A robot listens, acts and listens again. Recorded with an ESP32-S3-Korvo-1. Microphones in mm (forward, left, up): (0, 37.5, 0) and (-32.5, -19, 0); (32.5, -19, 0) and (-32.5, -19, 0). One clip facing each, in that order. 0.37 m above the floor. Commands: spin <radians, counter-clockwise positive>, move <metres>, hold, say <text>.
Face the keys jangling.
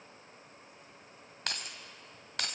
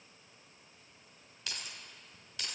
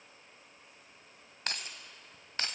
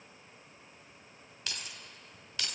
spin 0.87
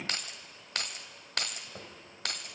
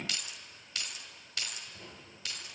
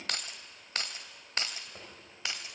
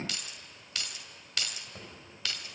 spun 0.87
spin 1.13
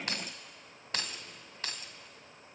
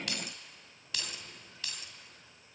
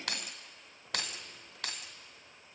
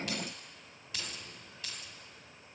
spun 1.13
spin 0.26
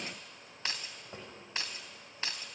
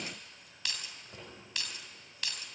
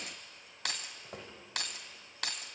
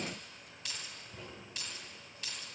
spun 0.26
say Found it: keys jangling, straight ahead.